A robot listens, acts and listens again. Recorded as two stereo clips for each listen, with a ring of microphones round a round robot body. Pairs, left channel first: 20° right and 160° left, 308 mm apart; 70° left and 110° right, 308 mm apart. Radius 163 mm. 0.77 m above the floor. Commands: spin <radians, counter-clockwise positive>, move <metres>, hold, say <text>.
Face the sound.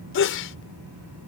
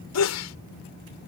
spin 0.52
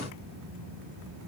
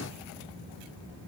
say Facing where the sneeze came from. I can't hear it now.